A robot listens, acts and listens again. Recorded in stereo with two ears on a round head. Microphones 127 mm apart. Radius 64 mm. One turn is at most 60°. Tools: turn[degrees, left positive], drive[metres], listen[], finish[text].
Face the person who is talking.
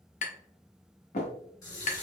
Action: listen[]
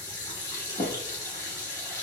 Action: listen[]
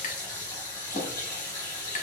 Action: finish[I can't make out anyone speaking, only a running tap and tapping.]